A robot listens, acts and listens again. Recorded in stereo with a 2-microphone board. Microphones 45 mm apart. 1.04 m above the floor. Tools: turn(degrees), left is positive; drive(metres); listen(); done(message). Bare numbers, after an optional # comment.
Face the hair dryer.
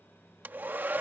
# The hair dryer: about 45° right or 135° right.
turn(-45)
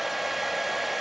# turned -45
done("Facing the hair dryer.")